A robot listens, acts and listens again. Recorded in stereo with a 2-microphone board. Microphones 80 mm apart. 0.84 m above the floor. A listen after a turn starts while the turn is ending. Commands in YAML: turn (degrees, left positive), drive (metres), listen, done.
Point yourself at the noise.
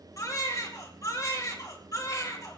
turn: 45
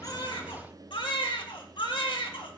turn: 95
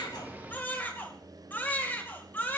turn: 25
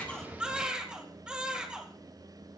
turn: -10
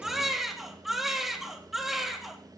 done: "Found it: a baby crying, straight ahead."